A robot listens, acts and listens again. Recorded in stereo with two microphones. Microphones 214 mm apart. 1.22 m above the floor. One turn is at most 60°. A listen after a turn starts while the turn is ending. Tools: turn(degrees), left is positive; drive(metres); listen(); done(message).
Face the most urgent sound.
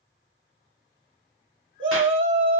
turn(degrees=-60)
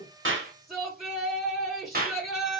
done("Facing the shout.")